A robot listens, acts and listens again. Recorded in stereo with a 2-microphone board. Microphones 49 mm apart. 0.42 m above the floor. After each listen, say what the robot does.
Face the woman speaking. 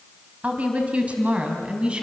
Turn 25° right.
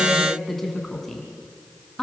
Turn 10° left.
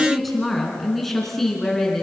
Facing the woman speaking, over 4 m away.